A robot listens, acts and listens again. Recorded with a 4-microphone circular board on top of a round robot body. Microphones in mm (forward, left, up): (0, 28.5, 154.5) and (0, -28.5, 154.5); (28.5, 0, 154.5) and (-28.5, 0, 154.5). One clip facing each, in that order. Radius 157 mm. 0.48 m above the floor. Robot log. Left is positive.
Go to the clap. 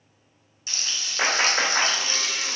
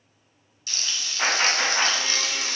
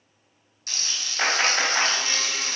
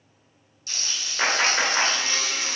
note: The clap: 90° left.
cmd yaw +90
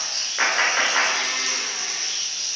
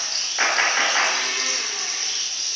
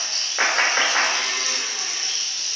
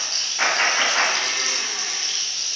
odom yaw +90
cmd fwd 1.0
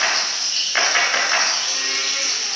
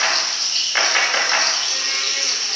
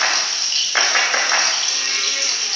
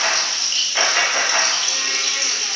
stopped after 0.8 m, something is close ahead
end: I am next to the clap.